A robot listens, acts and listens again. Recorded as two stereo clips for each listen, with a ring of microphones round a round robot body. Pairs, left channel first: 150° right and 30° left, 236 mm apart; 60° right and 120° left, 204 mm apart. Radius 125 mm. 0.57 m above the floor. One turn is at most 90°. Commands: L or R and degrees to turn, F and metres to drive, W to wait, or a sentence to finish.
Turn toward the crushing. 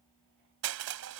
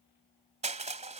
L60
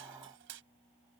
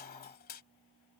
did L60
R15
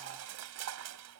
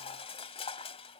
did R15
Found it: crushing, straight ahead.